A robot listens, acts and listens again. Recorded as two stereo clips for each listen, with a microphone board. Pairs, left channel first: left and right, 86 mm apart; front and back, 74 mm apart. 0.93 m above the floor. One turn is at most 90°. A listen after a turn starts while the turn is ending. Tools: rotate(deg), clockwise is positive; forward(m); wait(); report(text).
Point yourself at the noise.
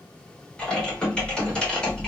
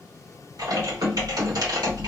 rotate(-90)
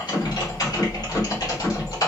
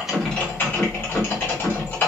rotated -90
rotate(-55)
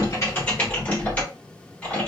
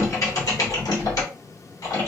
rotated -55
rotate(-20)
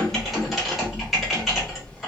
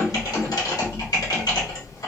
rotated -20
report("Found it: typing on a keyboard, straight ahead, 1 to 2 m away.")